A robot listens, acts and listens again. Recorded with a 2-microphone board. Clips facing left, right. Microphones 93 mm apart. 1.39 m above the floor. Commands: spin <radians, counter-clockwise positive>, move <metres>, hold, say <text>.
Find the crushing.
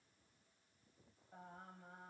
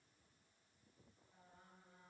hold
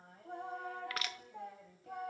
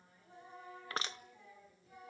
spin -0.52
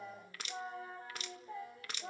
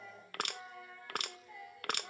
spin -2.09
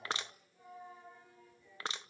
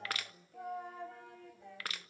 spin 0.44
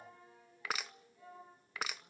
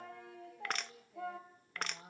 say Facing the crushing, under 1 m away.